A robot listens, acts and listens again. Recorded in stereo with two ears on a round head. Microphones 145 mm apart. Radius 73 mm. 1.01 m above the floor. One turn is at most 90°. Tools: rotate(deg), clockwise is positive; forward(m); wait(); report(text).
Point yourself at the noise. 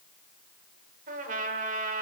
rotate(55)
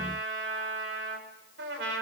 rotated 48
rotate(75)
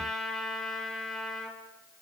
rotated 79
report("Found it: a trumpet, straight ahead, 2 to 4 m away.")